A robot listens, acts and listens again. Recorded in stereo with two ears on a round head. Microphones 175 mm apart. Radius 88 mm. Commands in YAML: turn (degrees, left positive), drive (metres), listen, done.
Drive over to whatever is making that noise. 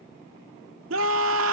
turn: -90
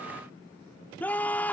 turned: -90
turn: 10
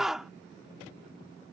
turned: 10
drive: 1.0
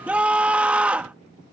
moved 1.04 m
turn: -10
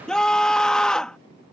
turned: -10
drive: 1.0
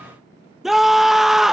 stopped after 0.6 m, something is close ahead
done: "I am next to the scream."